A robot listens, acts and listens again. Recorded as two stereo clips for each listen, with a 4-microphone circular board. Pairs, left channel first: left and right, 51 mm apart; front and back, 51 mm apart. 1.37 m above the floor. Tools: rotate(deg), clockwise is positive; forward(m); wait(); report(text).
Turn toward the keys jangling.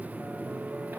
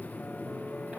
wait()
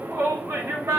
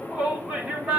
wait()
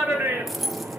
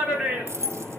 rotate(-180)
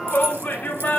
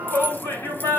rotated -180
wait()
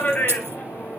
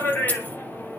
wait()
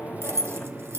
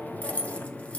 rotate(65)
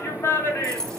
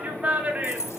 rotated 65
rotate(-15)
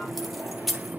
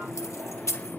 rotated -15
report("Facing the keys jangling, 2 to 4 m away.")